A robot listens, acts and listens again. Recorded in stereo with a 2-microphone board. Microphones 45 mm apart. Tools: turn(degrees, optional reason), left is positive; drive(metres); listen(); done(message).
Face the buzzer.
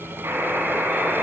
turn(degrees=-60, reason="The buzzer: about 60° right or 120° right.")
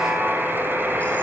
turn(degrees=-60, reason="So it is at 60° right.")
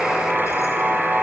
turn(degrees=-10, reason="The buzzer is now 10° right.")
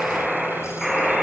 done("Found it: a buzzer, straight ahead.")